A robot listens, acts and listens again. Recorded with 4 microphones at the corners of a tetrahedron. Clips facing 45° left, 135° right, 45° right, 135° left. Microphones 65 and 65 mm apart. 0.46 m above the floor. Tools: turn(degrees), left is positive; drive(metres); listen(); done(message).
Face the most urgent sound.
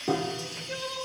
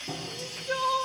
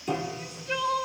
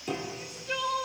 turn(degrees=-140)
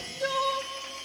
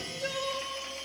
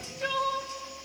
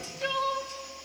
turn(degrees=20)
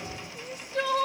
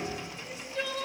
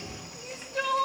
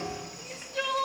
done("Facing the crying.")